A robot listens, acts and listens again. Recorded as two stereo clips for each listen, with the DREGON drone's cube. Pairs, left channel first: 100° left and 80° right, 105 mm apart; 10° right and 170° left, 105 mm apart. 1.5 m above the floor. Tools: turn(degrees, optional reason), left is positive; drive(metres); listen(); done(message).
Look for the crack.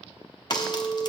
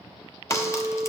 turn(degrees=50, reason="The crack: 50° left.")
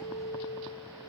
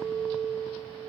done("I heard a crack from this way, but can't make it out now.")